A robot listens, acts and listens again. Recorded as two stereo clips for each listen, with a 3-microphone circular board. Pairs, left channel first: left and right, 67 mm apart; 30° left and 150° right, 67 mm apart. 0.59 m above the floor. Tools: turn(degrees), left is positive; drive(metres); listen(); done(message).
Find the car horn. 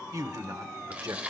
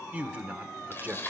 listen()
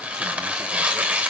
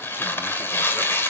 listen()
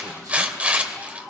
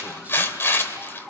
done("I can't make out a car horn to turn to.")